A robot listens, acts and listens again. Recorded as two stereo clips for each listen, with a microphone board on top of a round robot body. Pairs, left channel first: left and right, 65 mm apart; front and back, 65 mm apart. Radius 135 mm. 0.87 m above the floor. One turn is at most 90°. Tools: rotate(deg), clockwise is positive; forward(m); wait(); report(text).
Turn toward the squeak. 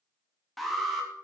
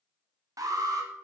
wait()
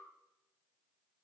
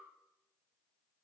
wait()
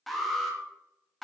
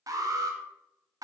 report("I can't make out a squeak, only an alarm.")